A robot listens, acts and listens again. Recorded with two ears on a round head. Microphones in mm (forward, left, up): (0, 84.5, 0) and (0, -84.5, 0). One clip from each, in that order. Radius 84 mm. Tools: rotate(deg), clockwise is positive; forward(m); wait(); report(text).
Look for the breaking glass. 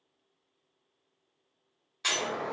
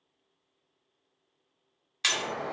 rotate(65)
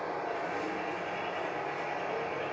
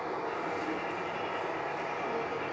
wait()
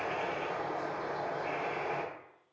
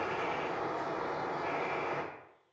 report("I heard breaking glass, but can't make it out now. It was about straight ahead or 50° right.")